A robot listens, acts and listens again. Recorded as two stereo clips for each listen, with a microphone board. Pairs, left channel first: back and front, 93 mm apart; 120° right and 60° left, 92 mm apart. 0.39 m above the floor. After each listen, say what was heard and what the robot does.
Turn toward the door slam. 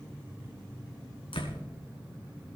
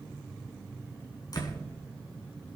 The door slam: 165° right. Turn 165° right.
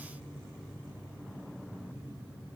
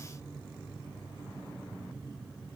Facing where the door slam came from. I can't hear it now.